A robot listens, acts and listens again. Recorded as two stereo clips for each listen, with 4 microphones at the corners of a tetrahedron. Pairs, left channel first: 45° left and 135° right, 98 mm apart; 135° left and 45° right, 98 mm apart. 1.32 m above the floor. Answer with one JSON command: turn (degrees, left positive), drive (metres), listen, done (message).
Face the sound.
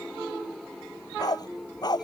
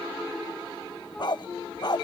{"turn": 90}
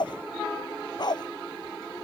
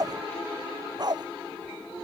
{"done": "Found it: a dog barking, straight ahead."}